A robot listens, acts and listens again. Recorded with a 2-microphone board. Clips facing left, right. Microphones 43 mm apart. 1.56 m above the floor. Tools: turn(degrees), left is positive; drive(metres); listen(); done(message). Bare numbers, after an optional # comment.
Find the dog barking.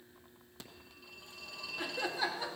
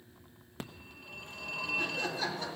listen()
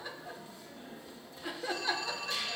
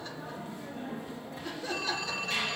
listen()
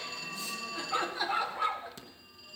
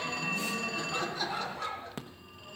# The dog barking: about 35° left or 145° left.
turn(35)
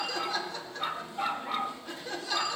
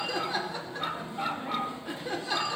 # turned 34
done("Facing the dog barking, 1 to 2 m away.")